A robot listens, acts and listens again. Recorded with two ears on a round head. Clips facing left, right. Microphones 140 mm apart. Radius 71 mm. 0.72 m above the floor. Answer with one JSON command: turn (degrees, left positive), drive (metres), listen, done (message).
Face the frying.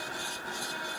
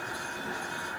{"listen": true}
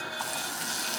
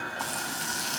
{"turn": 30}
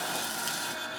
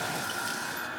{"listen": true}
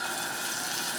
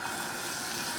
{"turn": 145}
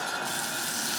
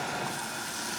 {"turn": 35}
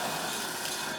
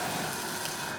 {"listen": true}
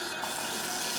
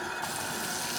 {"done": "Facing the frying."}